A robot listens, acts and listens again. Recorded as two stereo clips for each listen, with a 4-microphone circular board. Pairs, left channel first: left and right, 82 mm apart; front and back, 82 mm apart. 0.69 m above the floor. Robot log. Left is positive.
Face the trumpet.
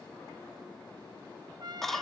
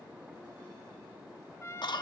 note: The trumpet: 60° right.
cmd yaw -60
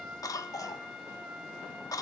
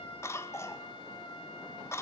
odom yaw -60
note: The trumpet is now 10° right.
cmd yaw -10
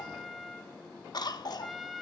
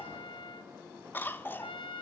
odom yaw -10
end: Found it: a trumpet, straight ahead, 1 to 2 m away.